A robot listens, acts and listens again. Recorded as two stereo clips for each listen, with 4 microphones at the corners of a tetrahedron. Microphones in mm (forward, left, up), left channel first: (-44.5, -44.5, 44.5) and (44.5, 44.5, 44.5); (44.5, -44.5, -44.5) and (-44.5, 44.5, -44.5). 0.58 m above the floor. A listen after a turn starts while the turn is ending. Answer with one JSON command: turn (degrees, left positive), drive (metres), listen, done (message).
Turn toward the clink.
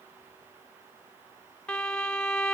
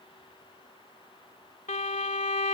{"listen": true}
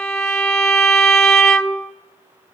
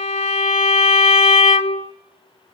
{"listen": true}
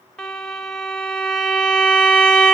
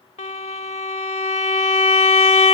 {"done": "I can't make out a clink to turn to."}